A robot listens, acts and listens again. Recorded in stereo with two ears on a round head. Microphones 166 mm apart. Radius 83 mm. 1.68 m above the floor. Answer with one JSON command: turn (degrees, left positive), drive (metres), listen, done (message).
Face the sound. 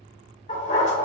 {"turn": 35}
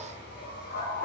{"turn": 125}
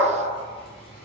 {"turn": 30}
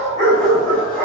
{"done": "Facing the dog barking."}